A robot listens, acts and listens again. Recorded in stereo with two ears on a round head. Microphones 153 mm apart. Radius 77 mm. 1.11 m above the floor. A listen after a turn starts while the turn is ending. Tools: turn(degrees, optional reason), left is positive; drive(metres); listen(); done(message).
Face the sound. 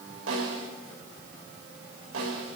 turn(degrees=-90)
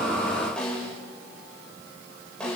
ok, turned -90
done("Facing the snare drum.")